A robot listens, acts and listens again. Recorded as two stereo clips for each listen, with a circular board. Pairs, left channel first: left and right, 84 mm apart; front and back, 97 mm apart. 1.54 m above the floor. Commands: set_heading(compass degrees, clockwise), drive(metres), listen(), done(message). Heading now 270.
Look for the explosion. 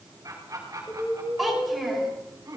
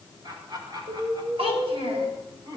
set_heading(125)
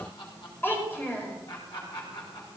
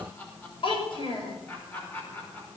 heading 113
set_heading(123)
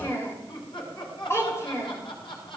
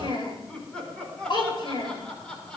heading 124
done("I heard an explosion from this way, but can't make it out now.")